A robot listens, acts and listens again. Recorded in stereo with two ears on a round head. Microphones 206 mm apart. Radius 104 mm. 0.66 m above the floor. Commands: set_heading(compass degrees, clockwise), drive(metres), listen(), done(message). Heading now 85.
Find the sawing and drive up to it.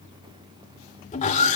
set_heading(55)
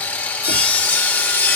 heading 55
set_heading(45)
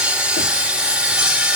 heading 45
drive(1.0)
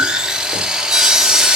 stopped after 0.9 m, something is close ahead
done("Arrived at the sawing, straight ahead.")